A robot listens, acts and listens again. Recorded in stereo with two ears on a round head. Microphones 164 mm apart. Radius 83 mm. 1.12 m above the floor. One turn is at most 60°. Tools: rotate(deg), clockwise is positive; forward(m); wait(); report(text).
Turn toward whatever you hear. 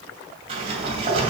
rotate(35)
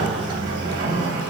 rotate(60)
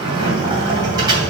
rotate(25)
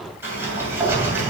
rotate(15)
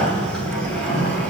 report("Facing the sliding door.")